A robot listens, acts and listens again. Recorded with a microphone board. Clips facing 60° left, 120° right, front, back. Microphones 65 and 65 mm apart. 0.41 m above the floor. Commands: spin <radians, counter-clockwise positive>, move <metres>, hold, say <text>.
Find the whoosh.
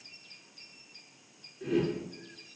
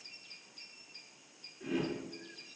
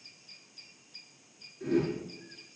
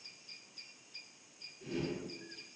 spin -0.61
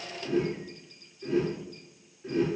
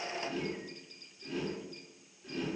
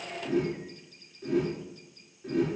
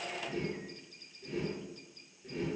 spin -0.17
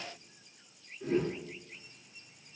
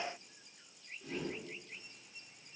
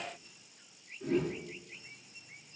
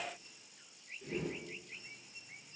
say Facing the whoosh.